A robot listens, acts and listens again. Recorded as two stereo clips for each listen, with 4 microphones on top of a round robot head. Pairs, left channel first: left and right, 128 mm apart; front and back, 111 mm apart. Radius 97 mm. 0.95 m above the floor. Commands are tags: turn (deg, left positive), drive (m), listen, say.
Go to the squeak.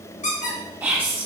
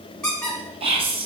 <turn deg="85"/>
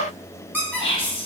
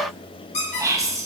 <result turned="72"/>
<turn deg="10"/>
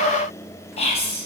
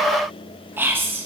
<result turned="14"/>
<listen/>
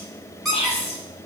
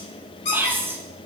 <drive m="1.0"/>
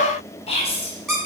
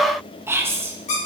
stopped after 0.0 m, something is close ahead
<say>Blocked. The squeak is further on, straight ahead.</say>